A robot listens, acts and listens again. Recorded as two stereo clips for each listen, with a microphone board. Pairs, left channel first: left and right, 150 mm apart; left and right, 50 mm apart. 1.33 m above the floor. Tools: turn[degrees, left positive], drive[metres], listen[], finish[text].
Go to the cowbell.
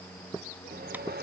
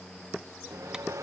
Action: listen[]
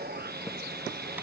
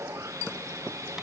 Action: listen[]
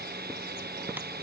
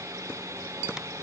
Action: finish[I can't make out a cowbell, only sawing.]